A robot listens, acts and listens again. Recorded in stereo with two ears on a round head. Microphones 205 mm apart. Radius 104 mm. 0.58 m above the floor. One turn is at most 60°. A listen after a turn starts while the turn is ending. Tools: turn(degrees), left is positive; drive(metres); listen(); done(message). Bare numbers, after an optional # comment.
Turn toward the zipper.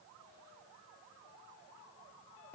listen()
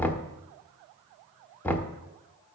listen()
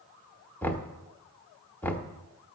done("I can't make out a zipper to turn to.")